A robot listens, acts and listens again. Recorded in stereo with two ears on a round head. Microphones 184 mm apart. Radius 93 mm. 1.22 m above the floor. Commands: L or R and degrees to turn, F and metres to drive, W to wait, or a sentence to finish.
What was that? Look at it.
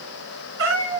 R65
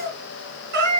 R55
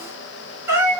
R15
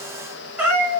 R10
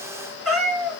Facing the cat meowing.